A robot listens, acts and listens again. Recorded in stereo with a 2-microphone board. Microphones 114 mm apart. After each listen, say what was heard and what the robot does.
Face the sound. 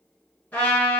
The trumpet: about 20° left or 160° left. Turn 20° left.
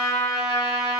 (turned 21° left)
So it is at 140° left. Turn 140° left.
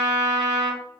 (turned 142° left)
Facing the trumpet.